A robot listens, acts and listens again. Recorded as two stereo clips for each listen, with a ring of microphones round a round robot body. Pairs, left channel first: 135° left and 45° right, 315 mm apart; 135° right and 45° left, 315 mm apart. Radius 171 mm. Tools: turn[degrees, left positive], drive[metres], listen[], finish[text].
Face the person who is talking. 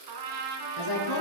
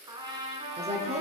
Thought: The woman speaking: 115° left.
Action: turn[115]
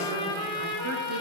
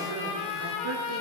Action: listen[]
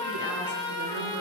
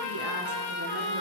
Action: listen[]
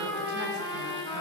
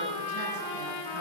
Action: finish[I heard a woman speaking from this way, but can't make it out now.]